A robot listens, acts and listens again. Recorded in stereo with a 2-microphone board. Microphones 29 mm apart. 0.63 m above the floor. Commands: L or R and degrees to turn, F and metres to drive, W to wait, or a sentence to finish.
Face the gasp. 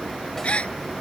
L40
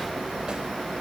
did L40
W
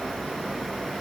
I heard a gasp, but can't make it out now. It was about straight ahead or 100° left.